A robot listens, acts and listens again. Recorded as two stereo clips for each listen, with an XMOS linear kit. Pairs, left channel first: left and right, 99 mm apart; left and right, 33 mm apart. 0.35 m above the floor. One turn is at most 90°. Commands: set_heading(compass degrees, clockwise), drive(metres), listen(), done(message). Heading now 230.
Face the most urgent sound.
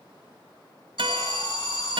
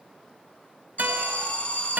set_heading(185)
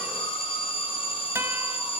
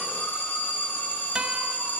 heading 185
set_heading(100)
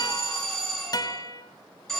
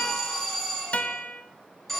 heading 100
done("Found it: an alarm, straight ahead, over 4 m away.")